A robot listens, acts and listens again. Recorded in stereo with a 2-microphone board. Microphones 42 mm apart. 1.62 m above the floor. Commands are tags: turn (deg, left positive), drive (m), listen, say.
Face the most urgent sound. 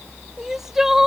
<turn deg="-30"/>
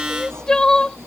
<turn deg="20"/>
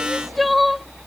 <say>Facing the crying.</say>